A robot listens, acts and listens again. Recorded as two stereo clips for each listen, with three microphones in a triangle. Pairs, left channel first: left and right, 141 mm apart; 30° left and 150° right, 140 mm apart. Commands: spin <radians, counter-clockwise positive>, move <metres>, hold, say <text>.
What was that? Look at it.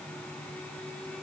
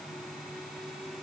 hold
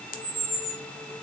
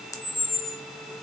spin 1.75
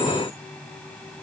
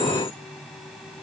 hold
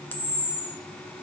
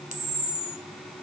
spin 0.26
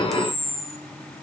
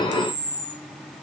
say Found it: a camera shutter, straight ahead, 1 to 2 m away.